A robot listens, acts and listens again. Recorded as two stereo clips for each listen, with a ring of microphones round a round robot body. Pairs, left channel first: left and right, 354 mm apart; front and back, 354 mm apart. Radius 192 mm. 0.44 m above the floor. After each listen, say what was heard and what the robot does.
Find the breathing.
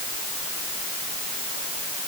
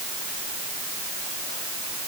Keep listening.
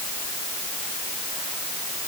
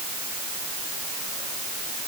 Keep listening.
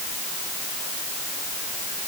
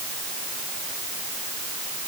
I can't make out breathing.